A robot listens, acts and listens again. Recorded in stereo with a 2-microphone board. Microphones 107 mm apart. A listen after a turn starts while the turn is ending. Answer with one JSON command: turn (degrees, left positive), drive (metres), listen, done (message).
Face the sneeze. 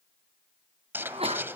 {"turn": -70}
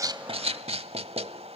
{"listen": true}
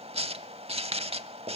{"done": "I heard a sneeze, but can't make it out now. It was about straight ahead or 40° right."}